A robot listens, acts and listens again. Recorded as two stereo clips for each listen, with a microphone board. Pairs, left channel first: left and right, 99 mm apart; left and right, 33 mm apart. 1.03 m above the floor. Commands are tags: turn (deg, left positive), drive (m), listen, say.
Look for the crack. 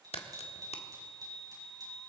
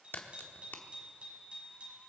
<turn deg="90"/>
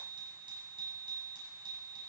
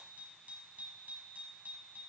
<say>I heard a crack from this way, but can't make it out now.</say>